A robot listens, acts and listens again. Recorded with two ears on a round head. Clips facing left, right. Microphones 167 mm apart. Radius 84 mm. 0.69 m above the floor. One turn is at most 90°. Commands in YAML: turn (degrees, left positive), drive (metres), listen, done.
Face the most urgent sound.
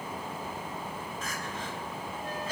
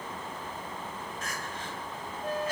turn: 70
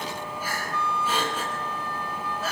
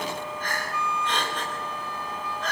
done: "Facing the crying."